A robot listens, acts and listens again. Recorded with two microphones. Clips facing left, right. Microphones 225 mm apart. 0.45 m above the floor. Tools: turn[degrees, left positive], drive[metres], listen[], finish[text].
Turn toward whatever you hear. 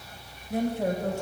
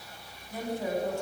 Thought: The woman speaking: about 65° left or 115° left.
Action: turn[65]
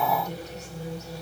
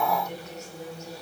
Thought: So it is at 35° left.
Action: turn[35]
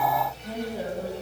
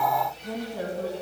Action: finish[Facing the woman speaking.]